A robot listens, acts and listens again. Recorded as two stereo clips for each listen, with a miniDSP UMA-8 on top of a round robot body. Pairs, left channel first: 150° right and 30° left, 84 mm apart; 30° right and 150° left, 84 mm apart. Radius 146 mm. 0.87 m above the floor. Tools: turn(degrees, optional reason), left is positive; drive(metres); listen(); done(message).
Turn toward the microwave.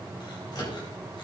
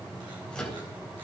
turn(degrees=-110, reason="The microwave: 110° right.")
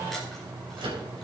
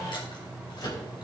turn(degrees=10, reason="The microwave is now 10° left.")
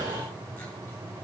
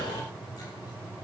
listen()
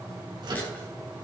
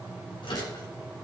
done("Found it: a microwave, straight ahead, 2 to 4 m away.")